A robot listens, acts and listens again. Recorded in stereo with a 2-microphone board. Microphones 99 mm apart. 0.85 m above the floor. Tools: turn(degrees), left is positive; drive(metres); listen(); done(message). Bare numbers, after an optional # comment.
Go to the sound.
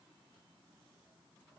listen()
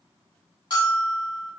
# The bell: about 55° left or 125° left.
turn(55)
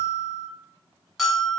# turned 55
drive(1.0)
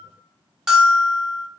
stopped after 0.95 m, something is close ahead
done("Arrived at the bell, straight ahead.")